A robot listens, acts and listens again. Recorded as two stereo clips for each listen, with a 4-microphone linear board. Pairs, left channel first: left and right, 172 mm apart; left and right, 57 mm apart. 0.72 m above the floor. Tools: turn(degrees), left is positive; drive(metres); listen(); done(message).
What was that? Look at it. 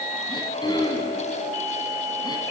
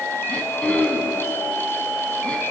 turn(degrees=25)
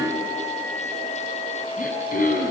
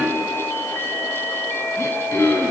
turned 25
turn(degrees=130)
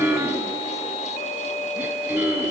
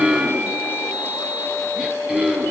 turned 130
turn(degrees=-10)
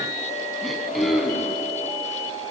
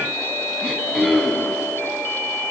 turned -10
done("Facing the throat clearing.")